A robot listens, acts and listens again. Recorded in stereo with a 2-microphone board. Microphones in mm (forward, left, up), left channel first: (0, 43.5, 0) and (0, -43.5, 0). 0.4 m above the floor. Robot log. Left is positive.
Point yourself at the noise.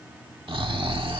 cmd yaw -90
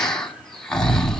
end: Found it: snoring, straight ahead, 1 to 2 m away.